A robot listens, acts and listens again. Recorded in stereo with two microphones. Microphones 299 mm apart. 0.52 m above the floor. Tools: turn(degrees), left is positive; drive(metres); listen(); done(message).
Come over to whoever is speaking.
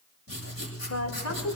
turn(degrees=60)
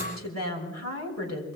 turn(degrees=60)
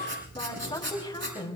turn(degrees=15)
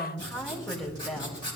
drive(metres=1.0)
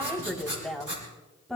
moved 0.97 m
drive(metres=1.0)
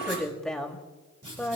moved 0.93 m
drive(metres=1.0)
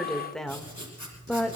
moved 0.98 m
drive(metres=1.0)
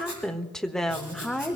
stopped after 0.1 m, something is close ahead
done("Arrived at the woman speaking, straight ahead.")